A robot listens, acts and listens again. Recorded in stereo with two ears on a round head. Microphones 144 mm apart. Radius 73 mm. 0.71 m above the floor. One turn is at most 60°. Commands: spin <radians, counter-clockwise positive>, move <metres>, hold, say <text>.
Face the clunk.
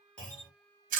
spin 0.52
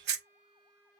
hold
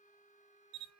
say I heard a clunk, but can't make it out now. It was about 25° right or 145° left.